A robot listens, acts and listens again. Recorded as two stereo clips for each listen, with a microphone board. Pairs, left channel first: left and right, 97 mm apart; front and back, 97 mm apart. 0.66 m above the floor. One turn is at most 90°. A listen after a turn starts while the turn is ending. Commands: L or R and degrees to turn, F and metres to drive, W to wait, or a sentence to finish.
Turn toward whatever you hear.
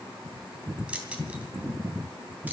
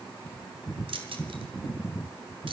R90
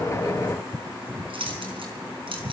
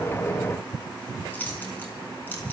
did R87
R70
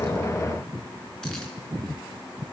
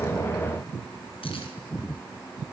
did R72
W
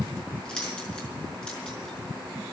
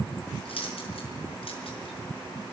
L10
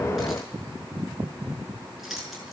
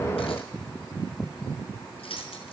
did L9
Found it: keys jangling, straight ahead.